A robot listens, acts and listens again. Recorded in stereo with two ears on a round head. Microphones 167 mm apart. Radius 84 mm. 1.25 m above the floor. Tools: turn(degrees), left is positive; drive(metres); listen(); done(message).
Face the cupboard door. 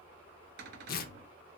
turn(degrees=-60)
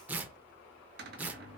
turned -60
turn(degrees=-55)
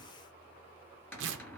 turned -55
turn(degrees=10)
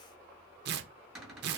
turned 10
done("Facing the cupboard door.")